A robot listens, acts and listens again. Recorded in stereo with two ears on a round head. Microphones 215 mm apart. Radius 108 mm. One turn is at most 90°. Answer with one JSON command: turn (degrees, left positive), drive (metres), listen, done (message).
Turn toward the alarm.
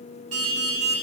{"turn": -70}
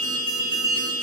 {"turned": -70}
{"turn": -40}
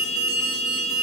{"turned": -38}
{"done": "Found it: an alarm, straight ahead, over 4 m away."}